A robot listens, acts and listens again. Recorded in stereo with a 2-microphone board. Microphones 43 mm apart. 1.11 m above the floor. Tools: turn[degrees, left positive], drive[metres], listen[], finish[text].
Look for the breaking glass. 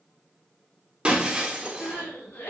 Thought: The breaking glass: about 25° right or 155° right.
Action: turn[-25]
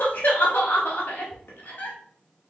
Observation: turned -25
Action: listen[]
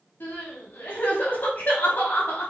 Action: finish[I heard breaking glass, but can't make it out now. It was about straight ahead or 130° right.]